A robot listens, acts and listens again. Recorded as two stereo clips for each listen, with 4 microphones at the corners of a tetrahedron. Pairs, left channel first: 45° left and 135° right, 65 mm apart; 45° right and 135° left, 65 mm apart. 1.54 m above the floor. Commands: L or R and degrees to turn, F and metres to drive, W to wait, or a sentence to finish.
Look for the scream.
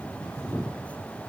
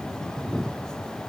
W
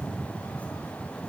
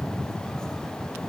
W
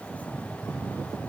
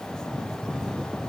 I can't make out a scream to turn to.